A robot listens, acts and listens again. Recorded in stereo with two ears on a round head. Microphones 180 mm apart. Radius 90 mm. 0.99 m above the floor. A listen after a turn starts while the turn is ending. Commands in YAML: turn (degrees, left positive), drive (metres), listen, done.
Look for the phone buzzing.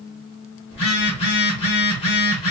turn: 30
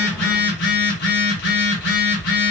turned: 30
turn: 125
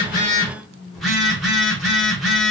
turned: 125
done: "Facing the phone buzzing."